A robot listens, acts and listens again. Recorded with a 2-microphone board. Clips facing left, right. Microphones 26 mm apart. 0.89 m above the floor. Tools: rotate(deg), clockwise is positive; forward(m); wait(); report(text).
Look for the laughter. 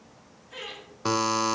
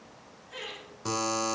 rotate(-30)
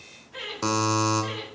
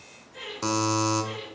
rotate(-135)
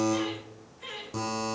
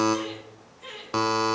rotate(-15)
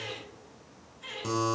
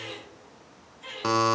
report("Found it: laughter, straight ahead.")